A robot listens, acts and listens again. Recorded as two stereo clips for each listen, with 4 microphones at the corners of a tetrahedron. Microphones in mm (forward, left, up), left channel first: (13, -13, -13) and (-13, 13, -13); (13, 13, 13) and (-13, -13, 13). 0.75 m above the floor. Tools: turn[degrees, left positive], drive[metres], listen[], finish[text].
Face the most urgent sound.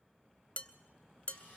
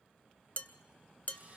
Action: listen[]
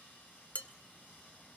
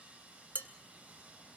Action: listen[]
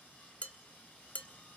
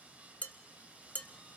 Action: finish[I can't make out anything urgent to turn to.]